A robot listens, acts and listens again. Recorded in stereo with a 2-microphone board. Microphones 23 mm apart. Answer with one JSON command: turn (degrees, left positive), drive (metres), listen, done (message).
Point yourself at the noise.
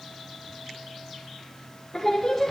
{"turn": 30}
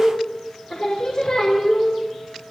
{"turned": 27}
{"turn": 140}
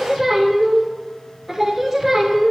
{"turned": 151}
{"turn": -10}
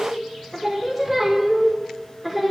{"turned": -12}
{"done": "Found it: singing, straight ahead."}